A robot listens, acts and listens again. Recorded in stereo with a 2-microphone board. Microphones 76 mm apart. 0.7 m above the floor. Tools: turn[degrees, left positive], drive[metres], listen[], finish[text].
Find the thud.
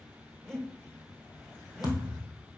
Thought: The thud: about 60° left or 120° left.
Action: turn[60]
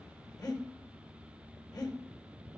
Action: listen[]
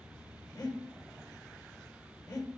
Action: finish[I heard a thud, but can't make it out now. It was about straight ahead or 60° left.]